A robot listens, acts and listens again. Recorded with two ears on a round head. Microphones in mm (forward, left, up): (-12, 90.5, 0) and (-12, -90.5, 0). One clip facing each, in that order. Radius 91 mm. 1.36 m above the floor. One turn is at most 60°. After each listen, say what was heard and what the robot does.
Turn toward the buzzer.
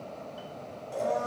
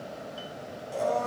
Keep listening.
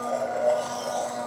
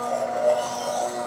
Keep listening.
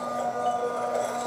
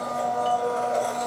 I can't make out a buzzer, only a blender.